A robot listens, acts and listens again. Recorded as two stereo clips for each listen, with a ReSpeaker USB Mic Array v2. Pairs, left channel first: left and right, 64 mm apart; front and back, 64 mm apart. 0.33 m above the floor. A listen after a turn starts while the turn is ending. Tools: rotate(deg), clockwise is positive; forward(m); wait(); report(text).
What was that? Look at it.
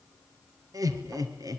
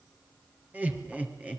rotate(110)
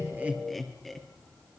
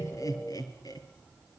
report("Found it: laughter, straight ahead.")